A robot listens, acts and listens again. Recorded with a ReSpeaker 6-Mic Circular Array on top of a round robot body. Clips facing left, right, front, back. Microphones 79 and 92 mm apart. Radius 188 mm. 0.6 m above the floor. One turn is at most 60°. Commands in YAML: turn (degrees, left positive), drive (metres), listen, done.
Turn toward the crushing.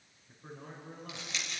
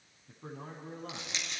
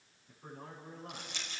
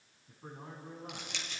turn: -60
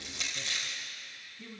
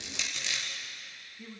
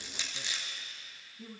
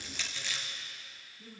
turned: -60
turn: -60
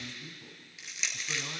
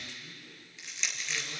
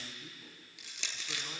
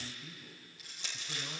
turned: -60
done: "Found it: crushing, straight ahead, 2 to 4 m away."